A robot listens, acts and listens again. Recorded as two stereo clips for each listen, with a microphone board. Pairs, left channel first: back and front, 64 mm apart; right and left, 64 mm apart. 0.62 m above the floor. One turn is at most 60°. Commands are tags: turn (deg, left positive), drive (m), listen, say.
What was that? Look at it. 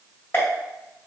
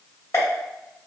<turn deg="-60"/>
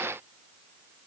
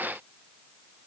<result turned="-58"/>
<turn deg="-60"/>
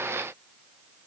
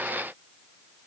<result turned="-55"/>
<turn deg="-15"/>
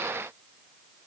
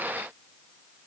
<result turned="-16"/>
<say>Facing where the pop came from. I can't hear it now.</say>